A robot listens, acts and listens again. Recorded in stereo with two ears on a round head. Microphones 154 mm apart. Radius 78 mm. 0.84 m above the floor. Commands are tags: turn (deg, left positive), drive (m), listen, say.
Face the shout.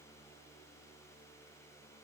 <listen/>
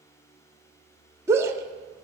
<turn deg="-15"/>
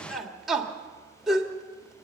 <say>Found it: a shout, straight ahead, 2 to 4 m away.</say>